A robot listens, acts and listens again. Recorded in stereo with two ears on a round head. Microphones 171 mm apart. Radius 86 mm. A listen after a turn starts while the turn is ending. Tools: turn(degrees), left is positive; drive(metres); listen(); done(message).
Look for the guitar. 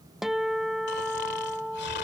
turn(degrees=30)
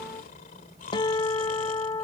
turn(degrees=150)
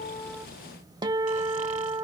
turn(degrees=-30)
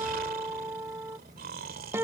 turn(degrees=-15)
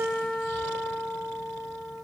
done("Facing the guitar.")